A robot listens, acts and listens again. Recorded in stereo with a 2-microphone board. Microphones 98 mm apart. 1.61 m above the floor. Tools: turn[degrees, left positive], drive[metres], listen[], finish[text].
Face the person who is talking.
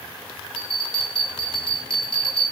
Action: listen[]
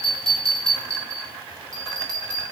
Action: listen[]
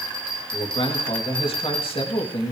Thought: The man speaking: about 65° left or 115° left.
Action: turn[65]
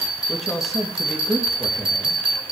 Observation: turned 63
Action: finish[Facing the man speaking, 2 to 4 m away.]